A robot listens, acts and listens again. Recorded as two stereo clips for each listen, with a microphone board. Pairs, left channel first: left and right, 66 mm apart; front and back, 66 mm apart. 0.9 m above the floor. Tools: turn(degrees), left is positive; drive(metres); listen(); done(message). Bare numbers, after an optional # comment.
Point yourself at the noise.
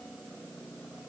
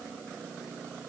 listen()
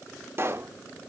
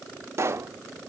# The pop: 135° right.
turn(-135)
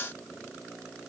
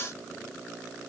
done("Facing where the pop came from. I can't hear it now.")